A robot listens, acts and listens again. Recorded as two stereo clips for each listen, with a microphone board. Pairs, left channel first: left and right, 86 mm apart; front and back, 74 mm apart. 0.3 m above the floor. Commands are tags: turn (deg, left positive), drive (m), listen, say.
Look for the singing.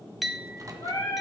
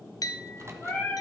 <turn deg="65"/>
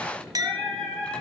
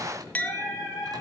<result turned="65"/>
<say>Facing the singing, over 4 m away.</say>